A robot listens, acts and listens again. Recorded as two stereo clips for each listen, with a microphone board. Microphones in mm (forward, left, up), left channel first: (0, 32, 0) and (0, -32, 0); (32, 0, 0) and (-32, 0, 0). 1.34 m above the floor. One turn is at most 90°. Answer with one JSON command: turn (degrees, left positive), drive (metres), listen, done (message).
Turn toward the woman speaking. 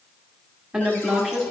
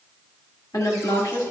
{"turn": -10}
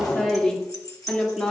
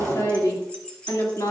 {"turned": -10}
{"turn": 10}
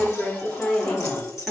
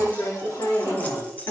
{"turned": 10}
{"turn": 10}
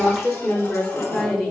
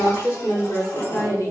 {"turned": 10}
{"turn": 10}
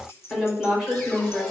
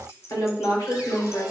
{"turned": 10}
{"done": "Found it: a woman speaking, straight ahead, over 4 m away."}